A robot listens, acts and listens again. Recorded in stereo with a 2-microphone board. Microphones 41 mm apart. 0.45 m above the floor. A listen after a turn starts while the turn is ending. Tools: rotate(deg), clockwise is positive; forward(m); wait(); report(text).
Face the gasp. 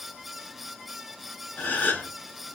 rotate(-55)
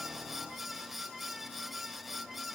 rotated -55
wait()
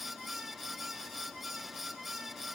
report("I heard a gasp, but can't make it out now. It was about straight ahead or 70° left.")